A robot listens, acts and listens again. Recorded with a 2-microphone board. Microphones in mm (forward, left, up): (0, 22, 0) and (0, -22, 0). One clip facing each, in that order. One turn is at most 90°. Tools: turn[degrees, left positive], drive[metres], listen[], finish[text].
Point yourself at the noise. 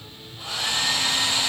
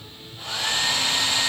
Action: turn[30]
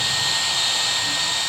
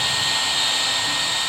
Thought: So it is at 25° right.
Action: turn[-25]
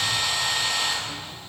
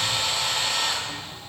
Action: finish[Found it: a hair dryer, straight ahead, 2 to 4 m away.]